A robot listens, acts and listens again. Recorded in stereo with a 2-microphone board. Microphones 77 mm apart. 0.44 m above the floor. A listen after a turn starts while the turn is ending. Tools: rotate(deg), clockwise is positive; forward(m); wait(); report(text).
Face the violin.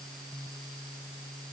wait()
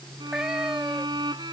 rotate(75)
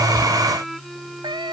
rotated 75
report("Found it: a violin, straight ahead.")